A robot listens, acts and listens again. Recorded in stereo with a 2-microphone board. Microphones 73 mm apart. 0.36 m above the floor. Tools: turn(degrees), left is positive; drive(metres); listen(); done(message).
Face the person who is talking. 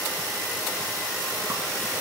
listen()
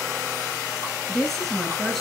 turn(degrees=30)
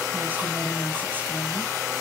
turn(degrees=-25)
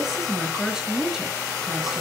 done("Found it: a woman speaking, straight ahead, over 4 m away.")